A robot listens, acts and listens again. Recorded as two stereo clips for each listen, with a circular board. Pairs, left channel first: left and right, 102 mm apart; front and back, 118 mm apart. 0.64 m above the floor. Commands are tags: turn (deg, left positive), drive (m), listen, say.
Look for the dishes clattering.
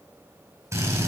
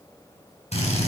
<listen/>
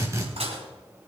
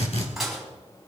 <turn deg="-90"/>
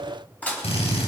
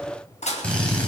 <turn deg="15"/>
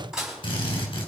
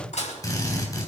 <say>Found it: dishes clattering, straight ahead.</say>